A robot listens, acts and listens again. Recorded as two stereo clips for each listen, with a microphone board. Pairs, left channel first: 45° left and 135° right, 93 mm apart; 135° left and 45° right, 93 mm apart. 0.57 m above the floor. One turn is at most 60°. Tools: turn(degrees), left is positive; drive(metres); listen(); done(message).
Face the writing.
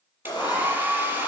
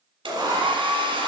done("Found it: writing, straight ahead.")